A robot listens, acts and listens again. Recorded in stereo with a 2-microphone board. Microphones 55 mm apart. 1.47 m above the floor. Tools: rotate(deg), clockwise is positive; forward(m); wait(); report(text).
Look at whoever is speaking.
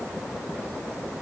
wait()
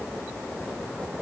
wait()
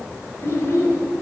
rotate(-65)
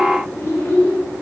rotate(-45)
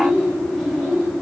report("Facing the child speaking, over 4 m away.")